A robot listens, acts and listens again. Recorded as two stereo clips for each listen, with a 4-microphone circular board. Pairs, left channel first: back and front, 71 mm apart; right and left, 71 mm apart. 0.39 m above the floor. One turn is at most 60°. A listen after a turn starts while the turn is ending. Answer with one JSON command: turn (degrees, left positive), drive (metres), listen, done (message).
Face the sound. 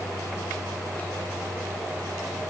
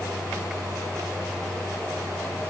{"listen": true}
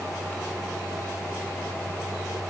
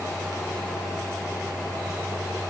{"listen": true}
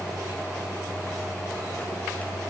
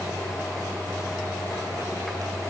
{"done": "I can't make out anything to turn to."}